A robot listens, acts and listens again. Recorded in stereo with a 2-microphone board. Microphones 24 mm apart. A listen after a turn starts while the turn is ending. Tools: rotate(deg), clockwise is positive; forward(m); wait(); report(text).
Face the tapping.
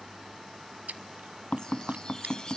rotate(-90)
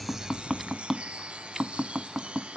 report("Facing the tapping, under 1 m away.")